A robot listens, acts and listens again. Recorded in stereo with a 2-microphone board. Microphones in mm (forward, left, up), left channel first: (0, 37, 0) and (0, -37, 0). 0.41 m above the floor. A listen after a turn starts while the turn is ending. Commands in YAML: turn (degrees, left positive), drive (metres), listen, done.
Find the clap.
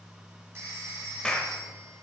turn: 30
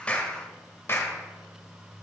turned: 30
turn: 135
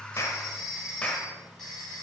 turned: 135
turn: 20
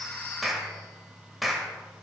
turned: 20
done: "Facing the clap, 1 to 2 m away."